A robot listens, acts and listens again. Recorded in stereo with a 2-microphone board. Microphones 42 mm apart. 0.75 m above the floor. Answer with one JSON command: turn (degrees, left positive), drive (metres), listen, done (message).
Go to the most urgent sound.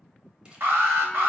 {"turn": -90}
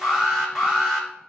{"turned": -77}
{"drive": 1.0}
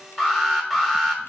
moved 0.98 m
{"drive": 1.0}
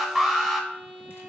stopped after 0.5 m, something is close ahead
{"done": "Arrived at the alarm, straight ahead."}